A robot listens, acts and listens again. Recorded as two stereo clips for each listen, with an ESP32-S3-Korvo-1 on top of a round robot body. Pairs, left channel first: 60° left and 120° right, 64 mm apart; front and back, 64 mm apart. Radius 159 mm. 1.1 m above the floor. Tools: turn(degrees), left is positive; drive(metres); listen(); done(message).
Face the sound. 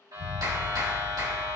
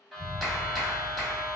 turn(degrees=-95)
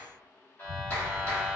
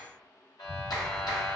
done("Facing the clap, 2 to 4 m away.")